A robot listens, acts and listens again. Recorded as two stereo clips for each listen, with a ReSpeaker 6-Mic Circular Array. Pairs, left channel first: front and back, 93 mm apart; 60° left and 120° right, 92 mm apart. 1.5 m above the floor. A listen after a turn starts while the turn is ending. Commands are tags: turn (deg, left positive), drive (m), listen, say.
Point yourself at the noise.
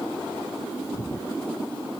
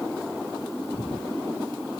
<turn deg="30"/>
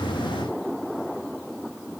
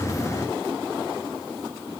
<listen/>
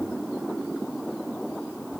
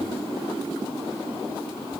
<listen/>
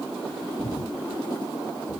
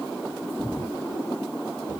<say>Facing the breathing.</say>